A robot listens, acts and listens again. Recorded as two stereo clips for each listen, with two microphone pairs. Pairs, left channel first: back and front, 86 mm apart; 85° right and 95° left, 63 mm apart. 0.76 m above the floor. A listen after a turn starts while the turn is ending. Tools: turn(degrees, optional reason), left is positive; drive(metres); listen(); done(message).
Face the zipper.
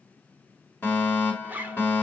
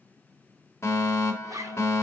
turn(degrees=65, reason="The zipper: 65° left.")
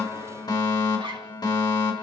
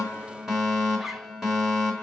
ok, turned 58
done("Found it: a zipper, straight ahead, 1 to 2 m away.")